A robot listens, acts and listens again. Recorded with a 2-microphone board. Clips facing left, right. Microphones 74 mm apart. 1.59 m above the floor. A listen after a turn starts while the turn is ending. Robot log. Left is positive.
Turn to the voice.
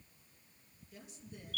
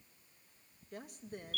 note: The woman speaking: about 55° right or 125° right.
cmd yaw -55
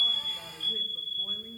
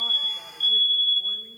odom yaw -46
cmd idle
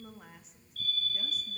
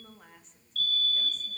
end: Found it: a woman speaking, straight ahead.